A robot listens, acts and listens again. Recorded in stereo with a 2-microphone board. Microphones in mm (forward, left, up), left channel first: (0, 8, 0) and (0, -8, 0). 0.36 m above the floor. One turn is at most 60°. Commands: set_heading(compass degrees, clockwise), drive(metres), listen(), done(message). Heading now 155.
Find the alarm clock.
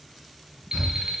set_heading(210)
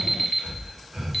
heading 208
done("Found it: an alarm clock, straight ahead.")